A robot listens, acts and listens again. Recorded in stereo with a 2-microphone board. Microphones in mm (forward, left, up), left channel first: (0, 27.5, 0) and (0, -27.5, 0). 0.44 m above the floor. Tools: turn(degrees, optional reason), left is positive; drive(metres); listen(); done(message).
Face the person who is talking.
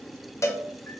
listen()
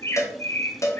listen()
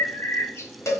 done("I can't make out anyone speaking, only a bird and a cowbell.")